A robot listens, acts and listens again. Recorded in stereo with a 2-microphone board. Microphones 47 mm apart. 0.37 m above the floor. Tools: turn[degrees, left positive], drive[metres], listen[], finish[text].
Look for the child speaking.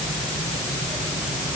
Action: listen[]
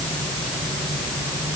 Action: listen[]
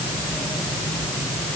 Action: finish[I can't make out a child speaking.]